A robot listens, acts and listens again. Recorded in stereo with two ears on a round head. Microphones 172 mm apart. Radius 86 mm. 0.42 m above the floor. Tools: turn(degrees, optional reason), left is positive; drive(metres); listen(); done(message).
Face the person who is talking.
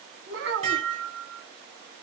turn(degrees=-65, reason="The child speaking: about 65° right or 115° right.")
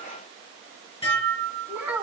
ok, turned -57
turn(degrees=-10, reason="So it is at 10° right.")
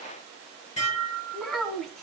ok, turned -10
done("Facing the child speaking, 2 to 4 m away.")